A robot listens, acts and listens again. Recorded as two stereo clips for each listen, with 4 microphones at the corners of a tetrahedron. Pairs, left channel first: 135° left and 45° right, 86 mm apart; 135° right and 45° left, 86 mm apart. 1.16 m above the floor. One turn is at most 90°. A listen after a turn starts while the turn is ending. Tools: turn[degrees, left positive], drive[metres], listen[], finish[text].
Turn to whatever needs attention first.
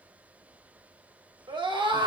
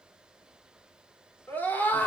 Thought: The scream: 65° right.
Action: turn[-65]
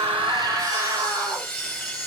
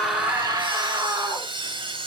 Action: finish[Found it: a scream, straight ahead, 2 to 4 m away.]